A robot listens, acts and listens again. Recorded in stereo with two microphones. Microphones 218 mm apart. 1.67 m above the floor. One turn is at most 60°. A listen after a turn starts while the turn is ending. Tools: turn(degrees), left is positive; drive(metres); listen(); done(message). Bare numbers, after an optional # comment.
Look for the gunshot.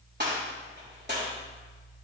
# The gunshot: about 50° right or 130° right.
turn(-50)
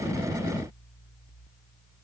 listen()
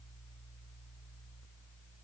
done("I heard a gunshot, but can't make it out now. It was about straight ahead or 80° right.")